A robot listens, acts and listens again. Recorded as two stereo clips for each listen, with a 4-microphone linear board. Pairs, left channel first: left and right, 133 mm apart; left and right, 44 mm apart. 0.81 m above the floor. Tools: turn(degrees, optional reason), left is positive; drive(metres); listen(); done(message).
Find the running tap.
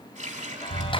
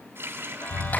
turn(degrees=-65, reason="The running tap: about 65° right or 115° right.")
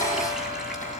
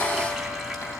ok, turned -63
listen()
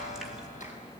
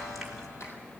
listen()
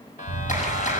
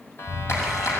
done("I heard a running tap, but can't make it out now. It was about 5° right or 50° right.")